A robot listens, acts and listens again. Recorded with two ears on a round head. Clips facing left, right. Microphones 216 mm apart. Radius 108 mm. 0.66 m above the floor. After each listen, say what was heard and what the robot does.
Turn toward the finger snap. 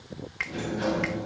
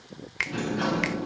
The finger snap: about 50° right or 130° right. Turn 50° right.
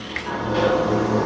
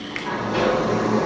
So it is at 10° right. Turn 10° right.
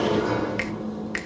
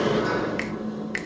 Found it: a finger snap, straight ahead.